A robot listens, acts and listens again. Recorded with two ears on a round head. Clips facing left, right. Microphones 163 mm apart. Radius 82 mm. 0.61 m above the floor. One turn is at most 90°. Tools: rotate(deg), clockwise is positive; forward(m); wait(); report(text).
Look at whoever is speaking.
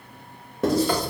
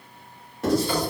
wait()
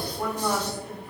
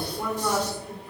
rotate(-30)
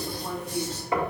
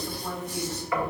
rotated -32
rotate(-90)
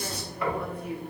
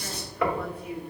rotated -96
rotate(-55)
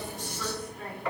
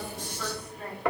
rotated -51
report("Found it: a woman speaking, straight ahead.")